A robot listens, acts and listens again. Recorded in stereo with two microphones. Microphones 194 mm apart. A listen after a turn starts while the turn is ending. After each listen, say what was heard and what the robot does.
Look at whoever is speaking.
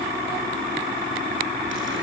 Keep listening.
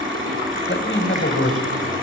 Turn 90° left.
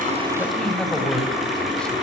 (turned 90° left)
Facing the man speaking.